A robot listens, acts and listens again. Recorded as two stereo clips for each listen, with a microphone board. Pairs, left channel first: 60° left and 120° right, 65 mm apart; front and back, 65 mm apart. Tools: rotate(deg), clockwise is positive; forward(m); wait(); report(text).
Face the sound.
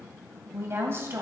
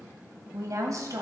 rotate(165)
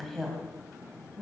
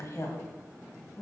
rotate(25)
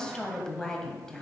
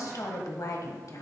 rotate(15)
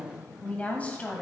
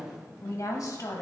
report("Facing the woman speaking.")